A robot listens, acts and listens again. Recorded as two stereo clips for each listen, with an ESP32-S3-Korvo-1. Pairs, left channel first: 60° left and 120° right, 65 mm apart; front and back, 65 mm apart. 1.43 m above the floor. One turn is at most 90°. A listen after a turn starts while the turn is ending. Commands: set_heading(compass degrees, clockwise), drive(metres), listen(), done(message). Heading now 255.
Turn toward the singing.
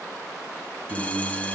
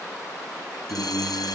set_heading(325)
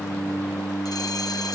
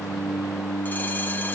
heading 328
done("Facing the singing, over 4 m away.")